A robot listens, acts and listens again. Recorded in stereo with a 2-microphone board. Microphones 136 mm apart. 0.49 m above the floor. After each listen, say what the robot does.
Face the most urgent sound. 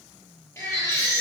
Turn 20° left.
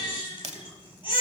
Turn 140° left.
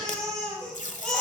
Found it: a baby crying, straight ahead, over 4 m away.